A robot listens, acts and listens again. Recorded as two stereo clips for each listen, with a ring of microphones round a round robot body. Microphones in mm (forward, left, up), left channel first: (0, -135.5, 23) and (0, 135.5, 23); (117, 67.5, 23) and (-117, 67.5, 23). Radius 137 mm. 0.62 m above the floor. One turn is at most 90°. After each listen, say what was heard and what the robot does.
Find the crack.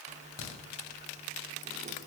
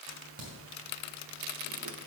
The crack: 120° right. Turn 90° right.
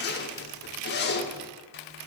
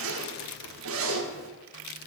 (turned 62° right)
Nothing new. It was at 55° right. Turn 55° right.
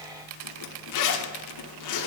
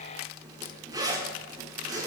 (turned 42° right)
Nothing new. It was at 15° right. Turn 15° right.
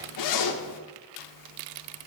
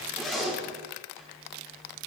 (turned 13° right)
Facing where the crack came from. I can't hear it now.